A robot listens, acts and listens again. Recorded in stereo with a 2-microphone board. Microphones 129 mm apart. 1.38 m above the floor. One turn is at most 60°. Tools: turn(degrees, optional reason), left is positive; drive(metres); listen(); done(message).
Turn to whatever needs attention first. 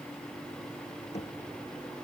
listen()
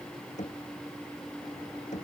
listen()
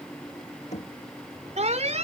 turn(degrees=-60, reason="The alarm: about 60° right or 120° right.")
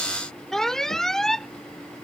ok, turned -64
done("Facing the alarm.")